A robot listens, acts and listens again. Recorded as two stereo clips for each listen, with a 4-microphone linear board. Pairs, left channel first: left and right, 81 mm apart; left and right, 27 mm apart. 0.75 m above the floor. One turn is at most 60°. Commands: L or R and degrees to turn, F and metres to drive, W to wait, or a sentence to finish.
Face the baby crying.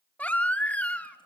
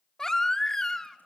L15
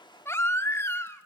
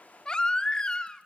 L60
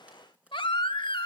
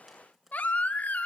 L60
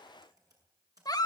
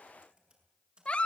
L50
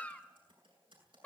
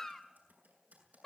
L20
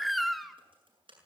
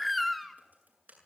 Facing the baby crying.